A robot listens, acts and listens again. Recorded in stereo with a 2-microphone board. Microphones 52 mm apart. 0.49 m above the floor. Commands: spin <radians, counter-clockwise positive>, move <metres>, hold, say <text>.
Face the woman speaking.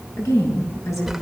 spin 1.57
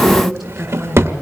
say Found it: a woman speaking, straight ahead, over 4 m away.